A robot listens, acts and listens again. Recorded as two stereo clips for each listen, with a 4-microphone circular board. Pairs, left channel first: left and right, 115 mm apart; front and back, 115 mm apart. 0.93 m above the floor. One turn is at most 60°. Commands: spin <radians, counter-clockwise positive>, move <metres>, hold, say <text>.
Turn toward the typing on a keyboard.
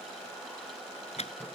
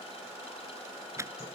spin 1.05
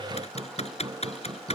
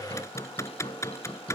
spin 1.05
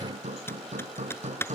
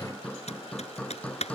spin 0.35
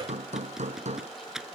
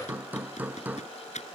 say Found it: typing on a keyboard, straight ahead.